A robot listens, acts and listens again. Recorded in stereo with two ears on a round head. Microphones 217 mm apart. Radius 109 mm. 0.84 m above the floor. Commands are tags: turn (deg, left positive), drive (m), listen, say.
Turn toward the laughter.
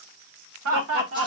<turn deg="-60"/>
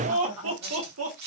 <turn deg="-65"/>
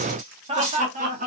<turn deg="-35"/>
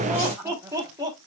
<turn deg="-15"/>
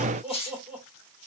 <say>Facing the laughter, 2 to 4 m away.</say>